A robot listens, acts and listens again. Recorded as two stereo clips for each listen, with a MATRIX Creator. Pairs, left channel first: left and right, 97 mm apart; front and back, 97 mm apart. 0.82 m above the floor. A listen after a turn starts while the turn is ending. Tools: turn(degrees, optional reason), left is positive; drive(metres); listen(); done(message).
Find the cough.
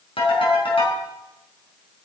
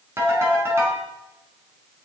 listen()
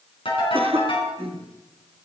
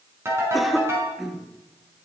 turn(degrees=-90, reason="The cough: 90° right.")
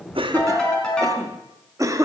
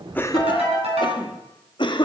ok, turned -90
turn(degrees=-35, reason="The cough is now 35° right.")
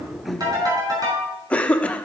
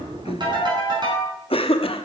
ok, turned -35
turn(degrees=15, reason="The cough is now 15° left.")
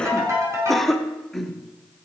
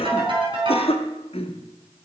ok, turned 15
done("Found it: a cough, straight ahead.")